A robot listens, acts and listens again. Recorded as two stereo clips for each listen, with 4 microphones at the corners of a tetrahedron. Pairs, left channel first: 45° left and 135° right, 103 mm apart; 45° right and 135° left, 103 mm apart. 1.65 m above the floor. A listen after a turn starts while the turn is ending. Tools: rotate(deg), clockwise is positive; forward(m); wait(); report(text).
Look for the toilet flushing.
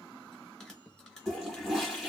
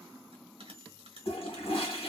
rotate(45)
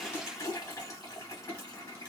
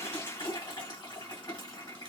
report("Found it: a toilet flushing, straight ahead, 1 to 2 m away.")